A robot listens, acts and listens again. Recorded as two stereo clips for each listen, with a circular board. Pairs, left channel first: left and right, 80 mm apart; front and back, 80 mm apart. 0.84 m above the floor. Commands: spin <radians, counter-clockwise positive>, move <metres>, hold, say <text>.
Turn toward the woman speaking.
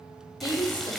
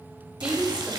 spin 1.83
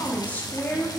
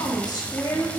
spin 0.52
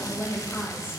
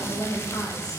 spin 0.44
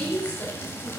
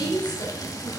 spin 0.35
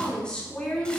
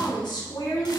spin 0.26
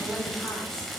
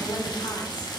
hold
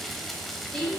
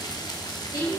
spin 0.17
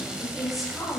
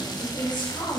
say Facing the woman speaking, 2 to 4 m away.